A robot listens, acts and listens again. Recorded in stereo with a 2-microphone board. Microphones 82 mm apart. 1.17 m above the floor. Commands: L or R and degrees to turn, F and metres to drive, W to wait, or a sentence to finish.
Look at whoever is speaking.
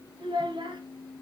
R90
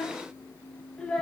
L10
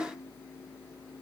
W
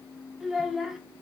Found it: a child speaking, straight ahead, under 1 m away.